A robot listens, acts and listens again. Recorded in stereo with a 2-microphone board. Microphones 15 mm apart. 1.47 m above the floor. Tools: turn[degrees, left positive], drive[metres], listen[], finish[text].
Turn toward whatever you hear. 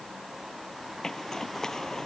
Thought: The zipper: about 45° left or 135° left.
Action: turn[45]
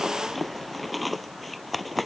Action: finish[Facing the zipper.]